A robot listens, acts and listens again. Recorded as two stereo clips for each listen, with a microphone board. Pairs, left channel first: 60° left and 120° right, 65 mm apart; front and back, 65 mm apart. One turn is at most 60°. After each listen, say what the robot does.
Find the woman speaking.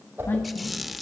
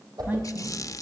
Turn 60° left.
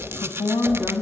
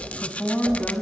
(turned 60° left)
Turn 60° left.
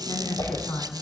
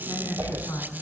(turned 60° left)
Turn 20° left.
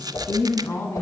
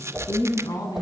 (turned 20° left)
Found it: a woman speaking, straight ahead.